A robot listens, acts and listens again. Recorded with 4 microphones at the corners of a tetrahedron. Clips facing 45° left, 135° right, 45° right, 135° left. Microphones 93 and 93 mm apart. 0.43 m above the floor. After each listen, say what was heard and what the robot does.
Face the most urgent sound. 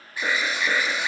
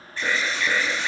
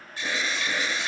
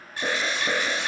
The alarm: 125° left. Turn 125° left.
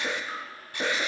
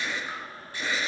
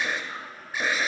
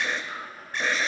The alarm is now 40° left. Turn 40° left.
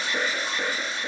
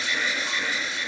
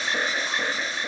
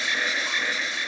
Facing the alarm, under 1 m away.